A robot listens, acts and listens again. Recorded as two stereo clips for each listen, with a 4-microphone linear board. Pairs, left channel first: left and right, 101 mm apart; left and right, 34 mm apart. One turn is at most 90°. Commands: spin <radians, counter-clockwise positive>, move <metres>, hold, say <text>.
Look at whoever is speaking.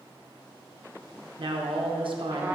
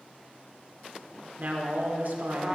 spin -0.96
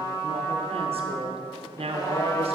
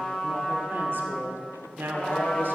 spin -1.22
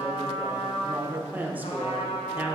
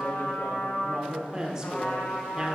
spin -0.26
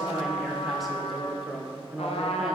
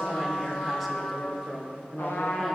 say Facing the woman speaking.